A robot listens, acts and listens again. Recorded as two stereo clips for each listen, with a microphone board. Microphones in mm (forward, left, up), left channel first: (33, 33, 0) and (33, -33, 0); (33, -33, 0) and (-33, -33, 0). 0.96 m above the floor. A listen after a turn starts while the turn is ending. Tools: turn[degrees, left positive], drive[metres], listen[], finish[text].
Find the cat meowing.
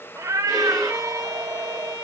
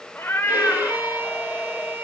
Thought: The cat meowing: 75° right.
Action: turn[-75]
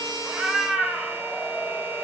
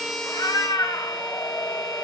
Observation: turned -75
Thought: The cat meowing is now 10° right.
Action: turn[-10]
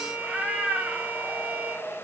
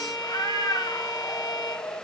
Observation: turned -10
Thought: The cat meowing is now 15° right.
Action: turn[-15]
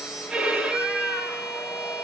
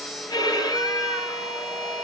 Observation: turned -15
Action: listen[]
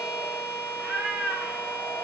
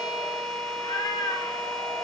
Action: finish[Facing the cat meowing.]